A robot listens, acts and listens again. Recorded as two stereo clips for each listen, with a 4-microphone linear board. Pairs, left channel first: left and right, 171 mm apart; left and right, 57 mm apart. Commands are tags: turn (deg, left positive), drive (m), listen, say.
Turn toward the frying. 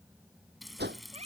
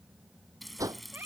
<turn deg="30"/>
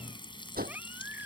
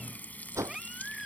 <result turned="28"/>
<turn deg="150"/>
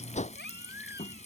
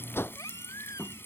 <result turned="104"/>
<turn deg="45"/>
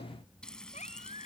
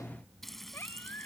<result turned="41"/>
<say>Found it: frying, straight ahead.</say>